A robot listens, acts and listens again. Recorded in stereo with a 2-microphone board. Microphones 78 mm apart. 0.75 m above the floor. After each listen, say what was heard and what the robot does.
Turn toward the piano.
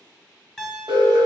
Turn 30° left.
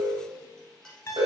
So it is at 135° left. Turn 135° left.
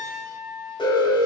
Facing the piano, 1 to 2 m away.